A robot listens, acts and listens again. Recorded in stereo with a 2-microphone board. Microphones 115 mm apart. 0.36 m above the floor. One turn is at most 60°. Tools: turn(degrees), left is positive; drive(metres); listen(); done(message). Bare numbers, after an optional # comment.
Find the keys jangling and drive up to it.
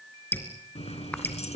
# The keys jangling: about 70° left or 110° left.
turn(60)
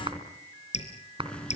# So it is at 10° left.
turn(10)
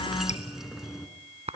drive(1.0)
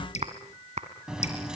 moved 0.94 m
drive(1.0)
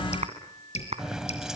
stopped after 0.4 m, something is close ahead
done("I am next to the keys jangling.")